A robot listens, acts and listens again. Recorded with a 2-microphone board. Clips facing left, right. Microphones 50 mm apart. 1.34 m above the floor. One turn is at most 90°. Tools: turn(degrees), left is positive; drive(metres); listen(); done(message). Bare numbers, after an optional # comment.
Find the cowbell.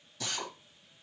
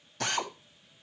listen()
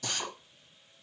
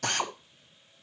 listen()
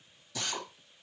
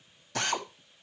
done("I can't make out a cowbell to turn to.")